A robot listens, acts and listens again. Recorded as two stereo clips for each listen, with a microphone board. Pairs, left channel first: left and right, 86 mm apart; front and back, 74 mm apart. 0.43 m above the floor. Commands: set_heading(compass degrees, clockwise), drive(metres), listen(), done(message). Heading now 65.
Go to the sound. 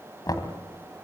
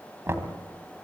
set_heading(295)
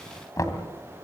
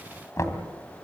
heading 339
set_heading(294)
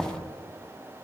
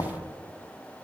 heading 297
drive(1.0)
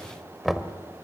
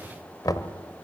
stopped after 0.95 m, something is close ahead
done("Arrived at the knocking, straight ahead.")